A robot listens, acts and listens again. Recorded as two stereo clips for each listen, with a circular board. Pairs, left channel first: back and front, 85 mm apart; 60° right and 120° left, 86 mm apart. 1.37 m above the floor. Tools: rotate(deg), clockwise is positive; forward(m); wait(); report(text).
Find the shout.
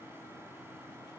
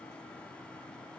wait()
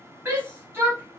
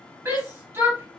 rotate(-60)
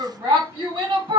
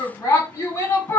rotate(10)
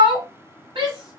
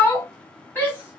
report("Facing the shout, 1 to 2 m away.")